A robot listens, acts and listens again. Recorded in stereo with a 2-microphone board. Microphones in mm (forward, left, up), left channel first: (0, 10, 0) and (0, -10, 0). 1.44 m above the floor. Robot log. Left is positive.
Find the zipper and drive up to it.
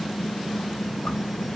cmd idle
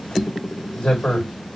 note: The zipper: about 65° left or 115° left.
cmd yaw +65
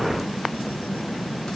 cmd idle
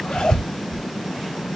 note: So it is at 45° left.
cmd yaw +45
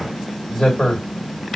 note: The zipper is now 15° left.
cmd yaw +15
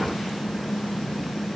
cmd idle
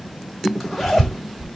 cmd fwd 1.0
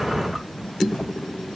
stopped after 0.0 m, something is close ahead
end: Something is in my way. I am facing the zipper but have not reached it.